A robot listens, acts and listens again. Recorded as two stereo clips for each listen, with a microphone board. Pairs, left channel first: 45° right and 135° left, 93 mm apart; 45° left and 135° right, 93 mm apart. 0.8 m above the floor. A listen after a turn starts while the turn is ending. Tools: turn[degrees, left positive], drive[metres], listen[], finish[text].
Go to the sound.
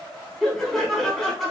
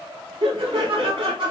Thought: The laughter: 130° right.
Action: turn[-130]
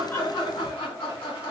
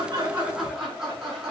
Thought: The laughter is now 50° right.
Action: turn[-50]
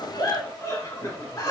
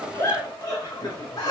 Action: drive[1.0]
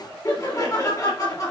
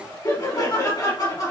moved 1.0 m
Action: drive[1.0]
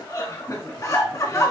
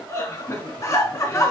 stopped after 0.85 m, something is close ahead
Action: finish[I am next to the laughter.]